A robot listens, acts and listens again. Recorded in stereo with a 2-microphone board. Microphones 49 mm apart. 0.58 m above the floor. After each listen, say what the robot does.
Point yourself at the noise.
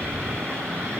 Keep listening.
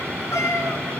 Turn 90° left.
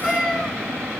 Facing the cat meowing.